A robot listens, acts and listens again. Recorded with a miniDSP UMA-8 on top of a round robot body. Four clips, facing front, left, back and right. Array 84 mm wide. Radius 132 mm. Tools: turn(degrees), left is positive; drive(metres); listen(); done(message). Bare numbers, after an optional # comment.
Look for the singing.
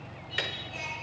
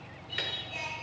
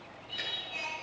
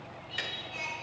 # The singing: 125° left.
turn(125)
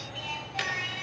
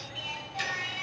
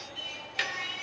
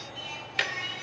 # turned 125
# The singing is now 30° left.
turn(30)
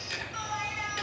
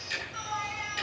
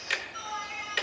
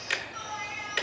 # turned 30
done("Found it: singing, straight ahead, 2 to 4 m away.")